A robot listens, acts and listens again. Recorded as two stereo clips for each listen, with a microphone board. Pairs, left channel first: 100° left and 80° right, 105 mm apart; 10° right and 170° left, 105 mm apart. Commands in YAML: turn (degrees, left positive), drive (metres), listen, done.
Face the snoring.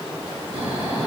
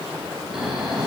turn: -105
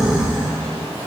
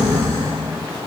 done: "Facing the snoring, over 4 m away."